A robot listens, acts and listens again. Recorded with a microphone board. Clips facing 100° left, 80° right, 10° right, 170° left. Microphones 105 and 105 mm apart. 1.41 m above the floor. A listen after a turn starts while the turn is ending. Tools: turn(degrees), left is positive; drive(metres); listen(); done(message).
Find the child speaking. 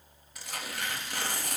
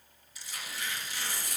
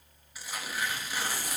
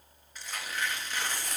listen()
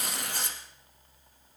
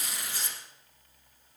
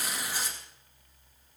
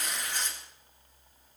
listen()
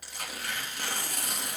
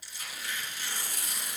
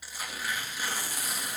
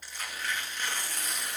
done("I can't make out a child speaking to turn to.")